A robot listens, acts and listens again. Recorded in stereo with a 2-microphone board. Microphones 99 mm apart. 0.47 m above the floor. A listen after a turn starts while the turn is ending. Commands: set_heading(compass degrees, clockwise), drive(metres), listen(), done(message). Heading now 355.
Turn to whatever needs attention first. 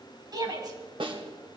set_heading(35)
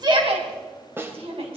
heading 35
set_heading(130)
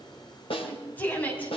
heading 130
set_heading(115)
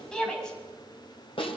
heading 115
done("Found it: a shout, straight ahead.")